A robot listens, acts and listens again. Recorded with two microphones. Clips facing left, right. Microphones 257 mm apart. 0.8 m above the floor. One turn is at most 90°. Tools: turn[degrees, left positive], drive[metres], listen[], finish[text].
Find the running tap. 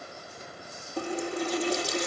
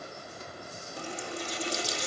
Thought: The running tap: about 60° left or 120° left.
Action: turn[60]
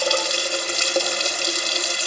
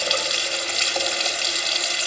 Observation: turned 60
Thought: So it is at 55° left.
Action: turn[55]
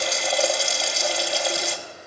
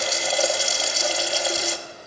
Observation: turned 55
Action: finish[Facing the running tap, under 1 m away.]